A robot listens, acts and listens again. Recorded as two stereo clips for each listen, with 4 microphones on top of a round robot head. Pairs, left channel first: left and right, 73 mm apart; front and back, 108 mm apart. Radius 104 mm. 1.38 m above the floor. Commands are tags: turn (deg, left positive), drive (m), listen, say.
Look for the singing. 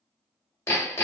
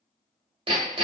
<listen/>
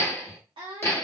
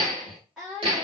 <turn deg="-95"/>
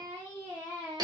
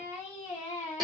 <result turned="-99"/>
<turn deg="25"/>
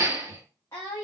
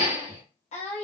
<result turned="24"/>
<turn deg="25"/>
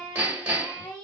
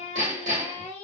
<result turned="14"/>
<turn deg="30"/>
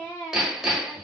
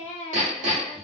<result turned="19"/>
<turn deg="15"/>
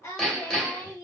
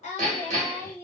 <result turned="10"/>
<turn deg="15"/>
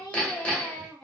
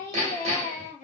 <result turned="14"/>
<say>Found it: singing, straight ahead, 1 to 2 m away.</say>